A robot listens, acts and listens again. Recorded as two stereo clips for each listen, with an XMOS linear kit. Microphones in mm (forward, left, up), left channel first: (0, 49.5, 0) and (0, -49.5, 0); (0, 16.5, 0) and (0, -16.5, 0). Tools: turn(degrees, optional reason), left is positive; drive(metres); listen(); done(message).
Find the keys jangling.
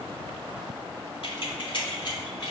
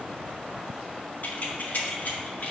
turn(degrees=45, reason="The keys jangling: about 45° left or 135° left.")
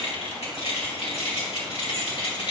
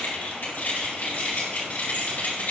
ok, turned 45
turn(degrees=110, reason="So it is at 110° left.")
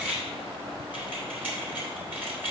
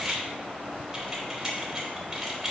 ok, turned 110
turn(degrees=-15, reason="The keys jangling is now 15° right.")
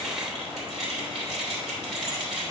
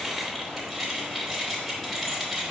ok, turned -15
done("Facing the keys jangling, 2 to 4 m away.")